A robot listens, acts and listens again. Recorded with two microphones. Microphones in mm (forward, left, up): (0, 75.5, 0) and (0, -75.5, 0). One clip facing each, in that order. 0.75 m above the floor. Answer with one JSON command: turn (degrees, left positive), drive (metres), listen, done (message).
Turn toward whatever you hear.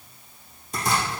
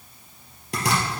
{"turn": -90}
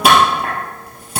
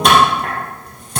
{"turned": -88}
{"done": "Facing the chopping."}